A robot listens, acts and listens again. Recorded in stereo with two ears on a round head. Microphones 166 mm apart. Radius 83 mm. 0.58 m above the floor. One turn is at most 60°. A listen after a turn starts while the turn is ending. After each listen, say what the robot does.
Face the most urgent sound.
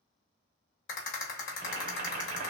Keep listening.
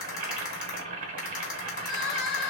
Turn 25° left.
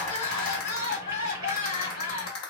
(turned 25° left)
Turn 60° left.
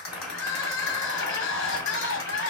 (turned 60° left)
Turn 60° left.
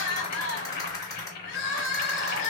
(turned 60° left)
Turn 55° left.
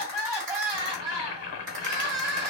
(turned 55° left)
Turn 20° right.
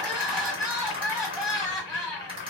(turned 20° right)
Found it: crying, straight ahead.